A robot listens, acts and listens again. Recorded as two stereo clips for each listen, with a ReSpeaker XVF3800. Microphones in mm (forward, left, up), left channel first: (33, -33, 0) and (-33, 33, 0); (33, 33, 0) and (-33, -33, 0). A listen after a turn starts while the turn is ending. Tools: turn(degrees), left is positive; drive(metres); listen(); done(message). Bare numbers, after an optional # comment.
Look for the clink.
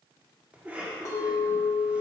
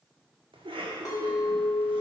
done("Facing the clink, 1 to 2 m away.")